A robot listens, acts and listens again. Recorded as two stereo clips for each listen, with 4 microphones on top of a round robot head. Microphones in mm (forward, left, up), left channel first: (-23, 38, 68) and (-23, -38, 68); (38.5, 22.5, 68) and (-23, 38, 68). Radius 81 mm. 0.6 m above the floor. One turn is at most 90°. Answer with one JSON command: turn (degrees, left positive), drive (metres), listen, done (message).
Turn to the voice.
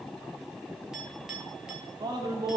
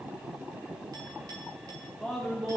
{"turn": -90}
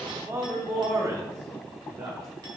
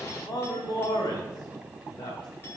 {"turn": -50}
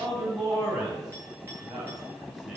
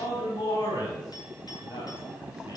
{"turn": -15}
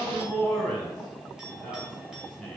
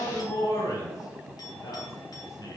{"done": "Facing the man speaking, 2 to 4 m away."}